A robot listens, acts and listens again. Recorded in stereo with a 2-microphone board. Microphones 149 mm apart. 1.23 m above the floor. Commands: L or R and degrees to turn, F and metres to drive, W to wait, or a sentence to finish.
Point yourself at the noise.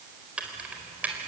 R30
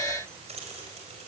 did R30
R135
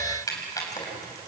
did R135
L25
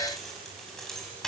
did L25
Found it: keys jangling, straight ahead.